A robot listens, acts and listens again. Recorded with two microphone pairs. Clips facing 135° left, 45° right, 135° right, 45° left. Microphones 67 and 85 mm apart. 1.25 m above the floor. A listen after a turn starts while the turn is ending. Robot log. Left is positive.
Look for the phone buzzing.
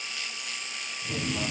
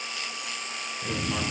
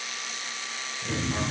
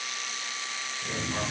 note: The phone buzzing: 150° right.
cmd yaw -150
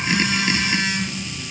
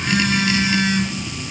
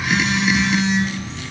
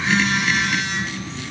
note: The phone buzzing is now 10° left.
cmd yaw +10
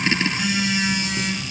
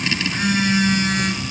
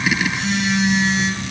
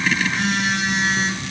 end: Facing the phone buzzing.